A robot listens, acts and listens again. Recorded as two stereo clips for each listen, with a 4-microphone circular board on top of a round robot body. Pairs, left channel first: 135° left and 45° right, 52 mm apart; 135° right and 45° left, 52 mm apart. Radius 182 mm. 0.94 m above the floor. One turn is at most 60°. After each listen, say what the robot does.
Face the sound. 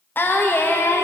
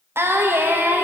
Turn 60° left.
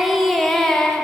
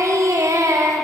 Turn 60° left.
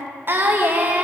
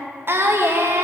Turn 15° left.
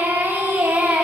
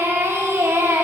Turn 10° left.
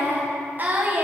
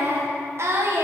Turn 15° left.
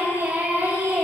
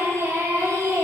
Turn 10° left.
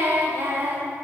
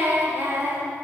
Found it: singing, straight ahead.